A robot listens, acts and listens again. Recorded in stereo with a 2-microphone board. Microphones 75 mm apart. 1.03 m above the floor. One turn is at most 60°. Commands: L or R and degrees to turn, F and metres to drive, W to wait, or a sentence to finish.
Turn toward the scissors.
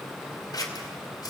L60
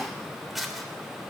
Facing the scissors, 2 to 4 m away.